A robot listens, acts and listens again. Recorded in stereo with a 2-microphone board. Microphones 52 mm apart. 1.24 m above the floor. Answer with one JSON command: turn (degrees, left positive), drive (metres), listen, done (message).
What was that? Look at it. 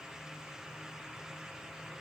{"listen": true}
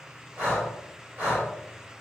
{"turn": -35}
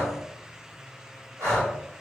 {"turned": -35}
{"turn": -110}
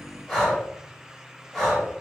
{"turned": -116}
{"done": "Facing the breathing."}